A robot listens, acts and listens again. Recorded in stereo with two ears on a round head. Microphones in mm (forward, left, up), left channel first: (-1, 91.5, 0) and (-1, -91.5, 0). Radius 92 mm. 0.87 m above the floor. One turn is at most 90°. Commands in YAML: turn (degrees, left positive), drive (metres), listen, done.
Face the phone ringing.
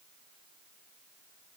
listen: true
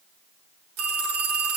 turn: -90
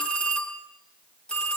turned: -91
done: "Facing the phone ringing, over 4 m away."